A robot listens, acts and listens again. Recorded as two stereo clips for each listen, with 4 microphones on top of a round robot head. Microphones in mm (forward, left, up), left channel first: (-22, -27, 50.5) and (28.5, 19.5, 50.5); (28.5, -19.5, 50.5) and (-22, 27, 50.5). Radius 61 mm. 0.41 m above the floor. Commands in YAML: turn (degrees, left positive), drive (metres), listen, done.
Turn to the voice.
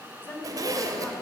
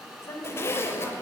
turn: -80
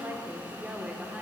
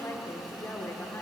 turn: -30
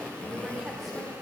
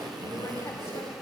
listen: true
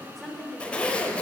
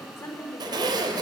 turn: -55
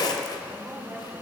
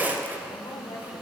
turn: -10
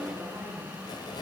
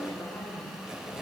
listen: true
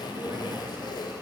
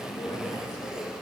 listen: true
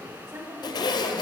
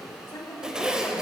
done: "Found it: a woman speaking, straight ahead, 1 to 2 m away."